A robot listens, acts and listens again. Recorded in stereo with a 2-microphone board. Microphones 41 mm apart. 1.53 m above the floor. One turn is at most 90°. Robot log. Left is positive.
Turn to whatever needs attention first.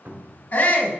note: The shout: about 60° left or 120° left.
cmd yaw +60
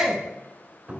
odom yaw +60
end: Found it: a shout, straight ahead.